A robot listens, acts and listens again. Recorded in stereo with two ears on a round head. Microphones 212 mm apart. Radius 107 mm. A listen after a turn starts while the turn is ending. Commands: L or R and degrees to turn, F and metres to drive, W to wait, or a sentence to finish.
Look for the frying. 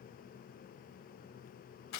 W
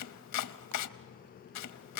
W
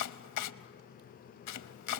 I can't make out frying, only chopping.